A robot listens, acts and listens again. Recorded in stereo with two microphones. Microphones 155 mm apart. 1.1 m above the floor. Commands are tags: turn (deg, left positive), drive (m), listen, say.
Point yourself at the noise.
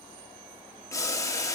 <turn deg="20"/>
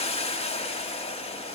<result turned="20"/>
<turn deg="135"/>
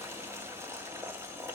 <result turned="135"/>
<turn deg="-15"/>
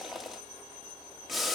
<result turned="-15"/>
<say>Facing the boiling.</say>